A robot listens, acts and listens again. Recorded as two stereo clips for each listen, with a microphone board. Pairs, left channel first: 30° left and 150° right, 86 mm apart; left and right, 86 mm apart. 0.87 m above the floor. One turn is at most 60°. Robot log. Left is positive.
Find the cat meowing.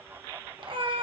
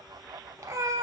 note: The cat meowing: 140° right.
cmd yaw -60
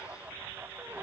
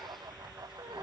note: Nothing new. It was at 80° right.
cmd yaw -60
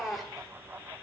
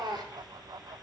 note: The cat meowing is now 60° right.
cmd yaw -60
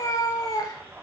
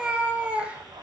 note: The cat meowing is now 15° right.
cmd yaw -15
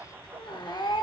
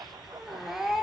end: Found it: a cat meowing, straight ahead, under 1 m away.